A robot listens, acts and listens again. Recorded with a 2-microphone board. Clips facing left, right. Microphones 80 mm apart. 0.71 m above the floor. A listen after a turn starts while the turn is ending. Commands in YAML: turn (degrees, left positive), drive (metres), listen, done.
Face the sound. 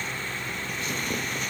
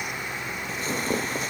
turn: -35
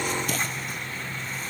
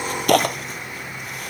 turn: -110
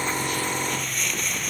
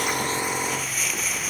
done: "Found it: tearing paper, straight ahead."